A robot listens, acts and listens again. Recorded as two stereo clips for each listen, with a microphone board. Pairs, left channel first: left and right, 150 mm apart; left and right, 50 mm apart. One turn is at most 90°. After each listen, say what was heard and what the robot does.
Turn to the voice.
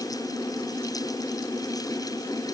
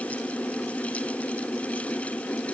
Keep listening.
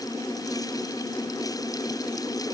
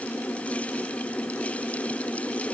Keep listening.
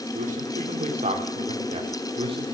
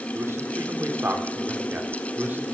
The man speaking: about 35° right or 145° right. Turn 35° right.
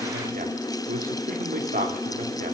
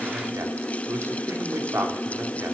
So it is at 115° right. Turn 90° right.
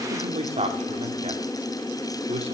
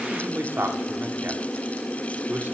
The man speaking is now 40° right. Turn 40° right.
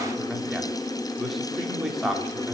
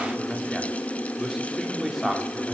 Facing the man speaking, 2 to 4 m away.